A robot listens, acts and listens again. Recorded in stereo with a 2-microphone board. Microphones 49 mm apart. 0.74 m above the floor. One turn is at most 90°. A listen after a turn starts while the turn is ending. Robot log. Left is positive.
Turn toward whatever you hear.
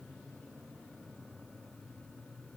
cmd idle
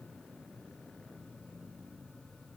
cmd idle
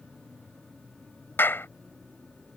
note: The clap: about 50° left or 130° left.
cmd yaw +50
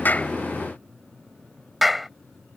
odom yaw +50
end: Facing the clap.